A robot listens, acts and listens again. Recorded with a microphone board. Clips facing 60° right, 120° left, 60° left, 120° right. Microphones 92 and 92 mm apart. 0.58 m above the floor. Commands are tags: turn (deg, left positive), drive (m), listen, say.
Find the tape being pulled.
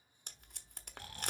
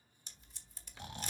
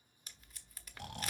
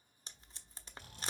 <turn deg="-60"/>
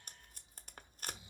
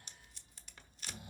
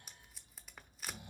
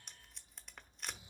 <turn deg="-25"/>
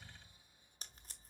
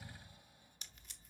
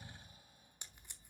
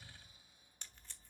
<turn deg="-10"/>
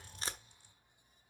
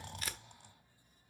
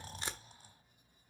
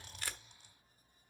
<say>Found it: tape being pulled, straight ahead.</say>